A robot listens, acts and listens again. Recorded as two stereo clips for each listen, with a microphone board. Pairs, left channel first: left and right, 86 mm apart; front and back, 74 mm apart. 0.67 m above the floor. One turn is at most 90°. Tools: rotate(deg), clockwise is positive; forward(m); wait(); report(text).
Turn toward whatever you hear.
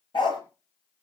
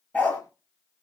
rotate(-70)
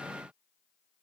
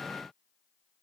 wait()
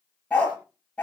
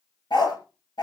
rotate(-15)
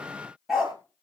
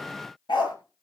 report("Facing the dog barking, over 4 m away.")